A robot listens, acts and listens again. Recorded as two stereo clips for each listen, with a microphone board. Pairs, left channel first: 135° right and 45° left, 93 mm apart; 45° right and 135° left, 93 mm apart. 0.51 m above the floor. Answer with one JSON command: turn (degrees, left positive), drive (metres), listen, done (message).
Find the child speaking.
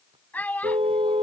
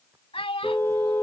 {"turn": -60}
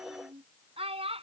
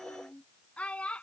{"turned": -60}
{"turn": 35}
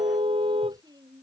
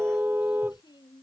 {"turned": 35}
{"listen": true}
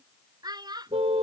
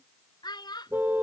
{"done": "Found it: a child speaking, straight ahead."}